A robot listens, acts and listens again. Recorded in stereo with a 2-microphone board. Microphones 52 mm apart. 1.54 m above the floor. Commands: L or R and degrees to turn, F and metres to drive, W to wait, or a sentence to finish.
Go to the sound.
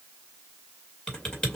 L15
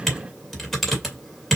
F1.0
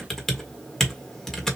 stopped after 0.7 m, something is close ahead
L10
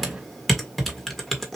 I am next to the typing on a keyboard.